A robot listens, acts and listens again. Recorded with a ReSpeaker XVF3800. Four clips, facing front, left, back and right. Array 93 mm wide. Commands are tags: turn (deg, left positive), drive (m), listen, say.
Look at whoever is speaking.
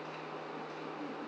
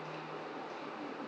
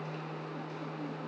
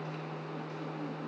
<listen/>
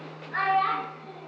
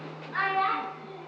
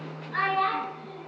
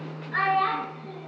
<turn deg="-70"/>
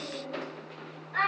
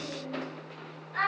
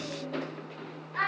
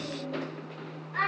<turn deg="-15"/>
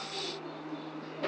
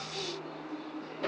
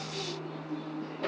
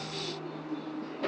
<listen/>
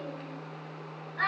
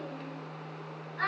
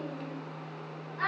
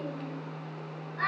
<say>Found it: a child speaking, straight ahead.</say>